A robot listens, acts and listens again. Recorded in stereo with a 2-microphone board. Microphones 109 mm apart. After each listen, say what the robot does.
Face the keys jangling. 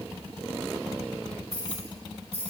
Turn 75° right.
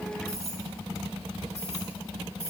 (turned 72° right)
Turn 30° right.
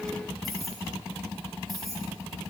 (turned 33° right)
Found it: keys jangling, straight ahead, over 4 m away.